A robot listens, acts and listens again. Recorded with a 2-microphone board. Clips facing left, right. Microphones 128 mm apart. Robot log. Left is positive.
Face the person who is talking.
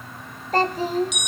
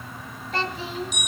note: The child speaking: about 40° left or 140° left.
cmd yaw +40
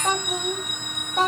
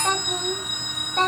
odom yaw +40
end: Facing the child speaking, 1 to 2 m away.